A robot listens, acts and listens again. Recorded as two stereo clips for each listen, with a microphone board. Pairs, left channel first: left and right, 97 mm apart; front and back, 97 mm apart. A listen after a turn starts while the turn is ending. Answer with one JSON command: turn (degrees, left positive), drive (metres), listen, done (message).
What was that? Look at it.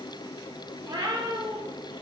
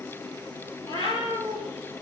{"turn": -40}
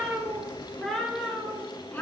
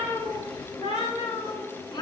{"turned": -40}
{"turn": 25}
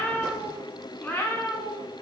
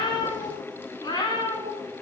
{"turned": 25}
{"turn": 40}
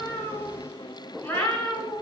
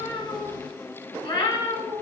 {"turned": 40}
{"turn": 25}
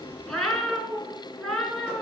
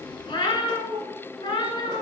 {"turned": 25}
{"done": "Found it: a cat meowing, straight ahead."}